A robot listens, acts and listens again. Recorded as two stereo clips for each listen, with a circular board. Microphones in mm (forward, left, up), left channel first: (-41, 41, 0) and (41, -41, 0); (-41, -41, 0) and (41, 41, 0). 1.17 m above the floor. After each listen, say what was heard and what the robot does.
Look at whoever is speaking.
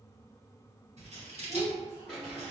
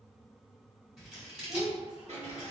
The child speaking: 130° left. Turn 130° left.
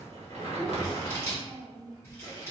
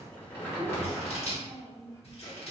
The child speaking is now 15° left. Turn 15° left.
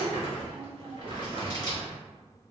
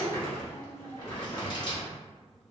Found it: a child speaking, straight ahead.